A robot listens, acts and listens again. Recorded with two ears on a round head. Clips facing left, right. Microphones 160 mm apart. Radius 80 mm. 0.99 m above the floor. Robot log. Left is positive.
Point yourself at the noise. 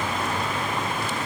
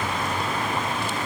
cmd idle
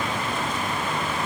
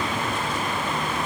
cmd idle
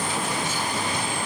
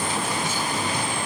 end: I can't make out anything to turn to.